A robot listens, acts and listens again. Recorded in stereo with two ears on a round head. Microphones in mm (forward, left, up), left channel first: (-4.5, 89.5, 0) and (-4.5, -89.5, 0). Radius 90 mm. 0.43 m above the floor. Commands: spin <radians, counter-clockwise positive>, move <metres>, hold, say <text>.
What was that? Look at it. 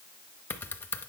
spin 0.52
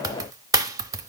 spin -0.35
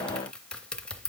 say Found it: typing on a keyboard, straight ahead, under 1 m away.